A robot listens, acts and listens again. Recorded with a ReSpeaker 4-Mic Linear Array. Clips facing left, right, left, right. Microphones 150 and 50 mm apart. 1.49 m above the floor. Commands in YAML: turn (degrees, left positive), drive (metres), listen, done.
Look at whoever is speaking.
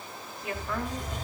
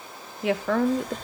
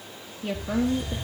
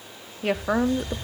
turn: -90
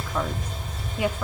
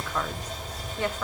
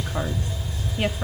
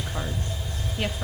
listen: true
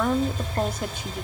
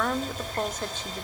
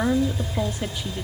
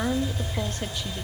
listen: true
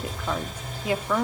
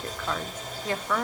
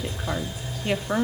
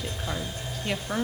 turn: 10
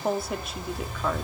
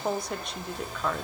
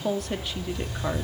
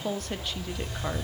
done: "Facing the woman speaking."